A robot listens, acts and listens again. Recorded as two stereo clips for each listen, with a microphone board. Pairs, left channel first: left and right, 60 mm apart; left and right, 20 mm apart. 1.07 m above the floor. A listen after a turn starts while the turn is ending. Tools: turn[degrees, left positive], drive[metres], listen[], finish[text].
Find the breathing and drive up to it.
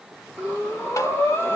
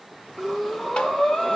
Thought: The breathing: about 45° left or 135° left.
Action: turn[45]
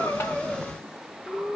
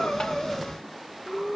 Action: drive[1.0]
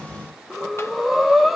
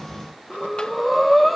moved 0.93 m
Action: drive[1.0]
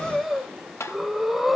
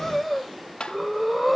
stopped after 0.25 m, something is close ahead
Action: finish[I am next to the breathing.]